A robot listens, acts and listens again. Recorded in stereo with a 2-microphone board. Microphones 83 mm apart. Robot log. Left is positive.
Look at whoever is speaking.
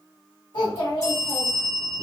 cmd yaw +90
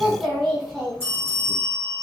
end: Found it: a child speaking, straight ahead, 1 to 2 m away.